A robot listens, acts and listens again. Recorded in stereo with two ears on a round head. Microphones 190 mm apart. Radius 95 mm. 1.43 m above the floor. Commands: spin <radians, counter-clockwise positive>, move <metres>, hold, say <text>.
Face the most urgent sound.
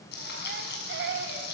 spin -0.96
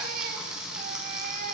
hold
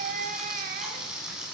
spin -0.87
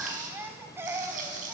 spin -0.26
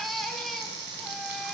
say Facing the baby crying, 1 to 2 m away.